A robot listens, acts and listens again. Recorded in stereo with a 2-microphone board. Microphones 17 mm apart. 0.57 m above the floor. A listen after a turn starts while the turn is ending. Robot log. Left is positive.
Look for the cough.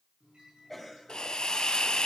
note: The cough: about 20° left or 160° left.
cmd yaw +20
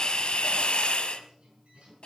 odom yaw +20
cmd idle
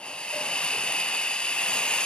cmd idle
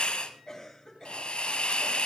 note: So it is at 135° left.
cmd yaw +135
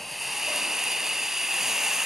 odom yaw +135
cmd idle
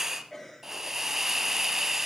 end: Found it: a cough, straight ahead.